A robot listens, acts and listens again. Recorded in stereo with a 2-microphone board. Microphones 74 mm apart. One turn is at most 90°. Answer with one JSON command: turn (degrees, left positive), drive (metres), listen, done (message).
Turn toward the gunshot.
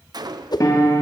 {"turn": -65}
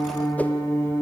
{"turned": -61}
{"listen": true}
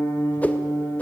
{"done": "I heard a gunshot, but can't make it out now. It was about 5° right or 55° right."}